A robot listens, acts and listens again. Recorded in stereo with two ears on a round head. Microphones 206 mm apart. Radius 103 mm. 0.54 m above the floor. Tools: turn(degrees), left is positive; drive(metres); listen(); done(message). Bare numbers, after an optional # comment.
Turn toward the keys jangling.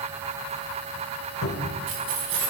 turn(-90)
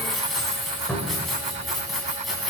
done("Found it: keys jangling, straight ahead.")